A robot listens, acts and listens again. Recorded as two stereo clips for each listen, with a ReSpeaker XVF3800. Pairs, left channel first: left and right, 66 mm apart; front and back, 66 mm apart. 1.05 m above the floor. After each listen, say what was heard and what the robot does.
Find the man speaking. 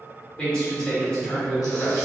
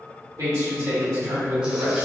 The man speaking: 165° left. Turn 165° left.
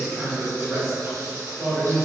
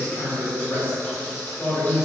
Found it: a man speaking, straight ahead.